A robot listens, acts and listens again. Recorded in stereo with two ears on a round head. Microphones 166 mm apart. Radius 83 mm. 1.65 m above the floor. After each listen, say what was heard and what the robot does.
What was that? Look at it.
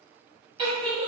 The giggle: about 20° right or 160° right. Turn 20° right.
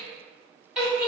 Facing the giggle, 1 to 2 m away.